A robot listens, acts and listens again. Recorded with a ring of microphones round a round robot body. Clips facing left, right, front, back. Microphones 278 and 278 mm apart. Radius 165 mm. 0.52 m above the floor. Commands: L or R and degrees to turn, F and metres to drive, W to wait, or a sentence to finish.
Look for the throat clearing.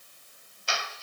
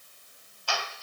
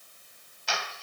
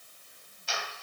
W
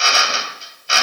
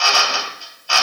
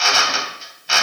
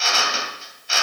W
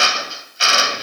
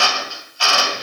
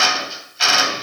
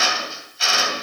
I can't make out throat clearing, only a drill.